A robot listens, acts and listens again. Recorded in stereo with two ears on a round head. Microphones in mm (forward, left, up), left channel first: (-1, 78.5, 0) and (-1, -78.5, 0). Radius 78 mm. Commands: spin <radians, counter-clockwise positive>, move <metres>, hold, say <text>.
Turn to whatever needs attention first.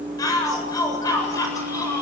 spin 0.35
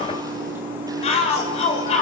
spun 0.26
spin 2.53
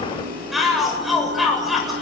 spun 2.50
say Found it: a shout, straight ahead.